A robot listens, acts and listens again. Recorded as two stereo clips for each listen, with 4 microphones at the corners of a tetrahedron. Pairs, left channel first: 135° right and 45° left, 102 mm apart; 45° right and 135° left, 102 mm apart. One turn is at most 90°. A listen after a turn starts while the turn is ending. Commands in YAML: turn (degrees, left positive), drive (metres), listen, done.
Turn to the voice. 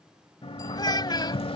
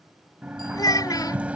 turn: -90
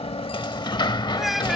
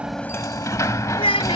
turn: -45
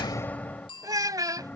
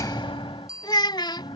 done: "Found it: a child speaking, straight ahead."